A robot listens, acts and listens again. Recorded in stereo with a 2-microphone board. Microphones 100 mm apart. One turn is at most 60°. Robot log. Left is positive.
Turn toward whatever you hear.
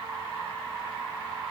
cmd idle
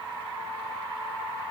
cmd idle
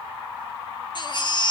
note: The baby crying: about 50° left or 130° left.
cmd yaw +50
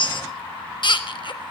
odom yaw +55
note: So it is at 65° left.
cmd yaw +60
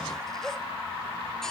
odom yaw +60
cmd idle
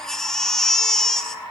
end: Found it: a baby crying, straight ahead, 1 to 2 m away.